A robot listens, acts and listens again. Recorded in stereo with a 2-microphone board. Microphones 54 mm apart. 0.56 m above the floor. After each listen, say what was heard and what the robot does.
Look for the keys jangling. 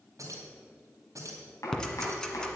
Turn 90° right.
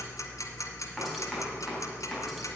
Keep listening.
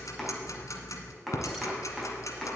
Keep listening.
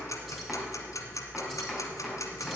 Facing where the keys jangling came from. I can't hear it now.